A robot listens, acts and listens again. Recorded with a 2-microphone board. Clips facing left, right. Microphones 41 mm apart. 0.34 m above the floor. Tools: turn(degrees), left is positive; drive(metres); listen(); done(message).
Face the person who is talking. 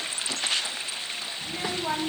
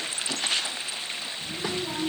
turn(degrees=60)
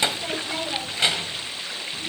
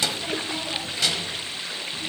turn(degrees=35)
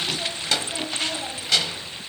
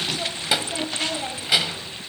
turn(degrees=-15)
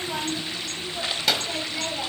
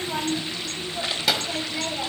done("Found it: a child speaking, straight ahead.")